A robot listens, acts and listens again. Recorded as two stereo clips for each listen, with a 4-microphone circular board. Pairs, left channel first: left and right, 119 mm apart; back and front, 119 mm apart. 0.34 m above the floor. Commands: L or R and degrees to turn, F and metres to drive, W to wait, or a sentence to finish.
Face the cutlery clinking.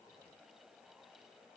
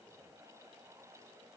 W
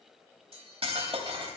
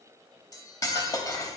R125
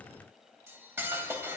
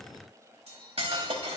R25
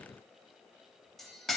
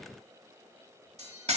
Facing the cutlery clinking.